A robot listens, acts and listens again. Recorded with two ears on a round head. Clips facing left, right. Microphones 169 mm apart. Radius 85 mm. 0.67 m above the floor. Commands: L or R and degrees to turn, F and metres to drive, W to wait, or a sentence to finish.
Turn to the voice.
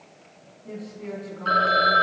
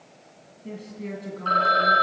R40
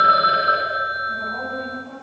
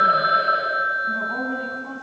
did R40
R105
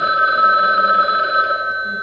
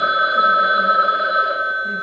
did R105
W
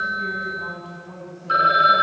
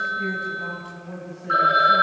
R15
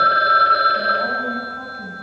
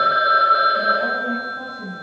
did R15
Found it: a woman speaking, straight ahead, over 4 m away.